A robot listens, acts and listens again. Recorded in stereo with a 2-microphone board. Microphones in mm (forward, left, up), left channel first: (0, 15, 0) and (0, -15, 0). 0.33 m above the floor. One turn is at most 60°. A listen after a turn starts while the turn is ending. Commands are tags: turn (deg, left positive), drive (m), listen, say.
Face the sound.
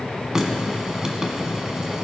<turn deg="-20"/>
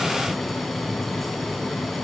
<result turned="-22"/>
<listen/>
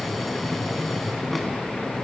<listen/>
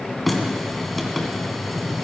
<say>Found it: a running tap, straight ahead, 1 to 2 m away.</say>